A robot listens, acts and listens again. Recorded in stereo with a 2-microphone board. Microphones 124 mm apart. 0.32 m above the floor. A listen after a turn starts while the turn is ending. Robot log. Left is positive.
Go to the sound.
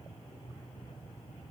cmd idle
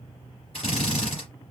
note: The drill: about 50° left or 130° left.
cmd yaw +50
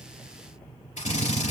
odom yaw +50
note: So it is at 75° left.
cmd yaw +75
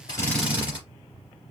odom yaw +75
note: The drill is now 10° right.
cmd yaw -10
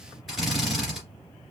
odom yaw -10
cmd fwd 1.0
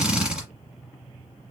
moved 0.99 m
note: The drill is now 10° right.
cmd yaw -10
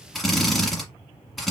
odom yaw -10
cmd fwd 1.0
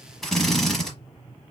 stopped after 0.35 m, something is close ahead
end: I am next to the drill.